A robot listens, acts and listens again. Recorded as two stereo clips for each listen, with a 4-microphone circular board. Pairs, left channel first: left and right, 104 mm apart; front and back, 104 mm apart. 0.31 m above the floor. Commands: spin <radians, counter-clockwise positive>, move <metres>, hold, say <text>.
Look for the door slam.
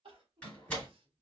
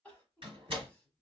spin 2.97
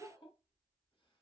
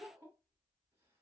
say I heard a door slam from this way, but can't make it out now.